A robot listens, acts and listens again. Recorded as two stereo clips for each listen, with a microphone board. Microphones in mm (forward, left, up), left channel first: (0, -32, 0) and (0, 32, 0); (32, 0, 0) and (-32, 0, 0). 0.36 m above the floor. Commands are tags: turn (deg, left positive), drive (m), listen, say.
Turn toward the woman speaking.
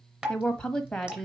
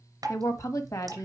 <turn deg="-10"/>
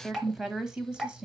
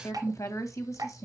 <turn deg="20"/>
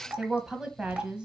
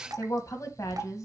<turn deg="15"/>
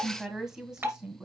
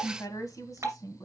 <turn deg="15"/>
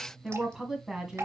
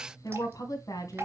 <say>Facing the woman speaking.</say>